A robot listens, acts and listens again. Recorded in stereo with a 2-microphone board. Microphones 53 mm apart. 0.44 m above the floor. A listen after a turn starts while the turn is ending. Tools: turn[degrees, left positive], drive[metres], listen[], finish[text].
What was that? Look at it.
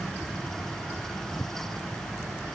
Action: listen[]
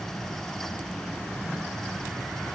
Action: listen[]
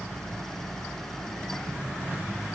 Action: finish[I can't make out anything to turn to.]